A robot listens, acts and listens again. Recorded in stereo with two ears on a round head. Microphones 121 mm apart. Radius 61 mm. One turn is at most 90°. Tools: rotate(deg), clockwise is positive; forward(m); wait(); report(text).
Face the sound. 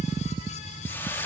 rotate(-20)
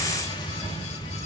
wait()
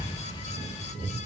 wait()
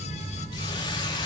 report("I heard a hiss, but can't make it out now. It was about straight ahead or 140° left.")